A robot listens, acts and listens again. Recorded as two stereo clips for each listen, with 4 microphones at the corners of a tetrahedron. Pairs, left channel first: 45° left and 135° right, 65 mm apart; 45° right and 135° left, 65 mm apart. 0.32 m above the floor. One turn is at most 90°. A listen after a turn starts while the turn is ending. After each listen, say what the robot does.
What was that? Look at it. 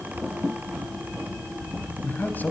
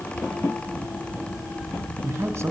Turn 90° left.
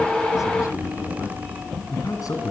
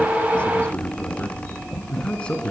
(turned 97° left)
Turn 30° left.
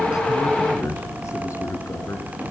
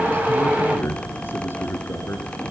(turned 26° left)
Turn 10° left.
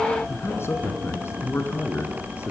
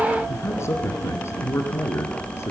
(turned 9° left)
Facing the man speaking.